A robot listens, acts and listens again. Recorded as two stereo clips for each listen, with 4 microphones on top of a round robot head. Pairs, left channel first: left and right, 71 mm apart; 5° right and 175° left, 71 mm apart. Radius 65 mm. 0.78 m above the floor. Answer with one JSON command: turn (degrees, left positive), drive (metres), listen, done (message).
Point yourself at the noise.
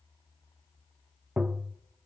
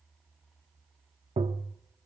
{"turn": -165}
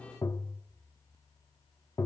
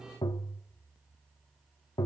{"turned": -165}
{"turn": 30}
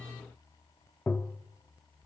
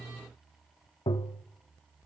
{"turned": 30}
{"turn": 15}
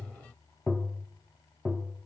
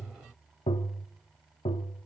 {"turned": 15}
{"done": "Facing the tapping, under 1 m away."}